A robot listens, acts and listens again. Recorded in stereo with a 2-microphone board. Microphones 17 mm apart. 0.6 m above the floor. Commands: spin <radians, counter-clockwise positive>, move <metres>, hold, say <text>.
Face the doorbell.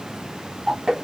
hold
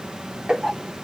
hold
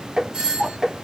spin -0.96
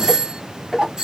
spin -0.79
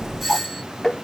say Found it: a doorbell, straight ahead.